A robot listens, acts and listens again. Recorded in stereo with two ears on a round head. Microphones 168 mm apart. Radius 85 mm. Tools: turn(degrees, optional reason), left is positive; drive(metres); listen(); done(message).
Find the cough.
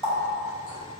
listen()
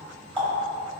listen()
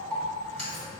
done("I can't make out a cough, only a running tap.")